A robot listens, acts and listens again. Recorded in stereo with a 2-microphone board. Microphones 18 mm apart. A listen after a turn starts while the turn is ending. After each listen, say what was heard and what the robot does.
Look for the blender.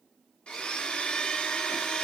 Turn 90° left.
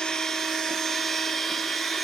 Facing the blender.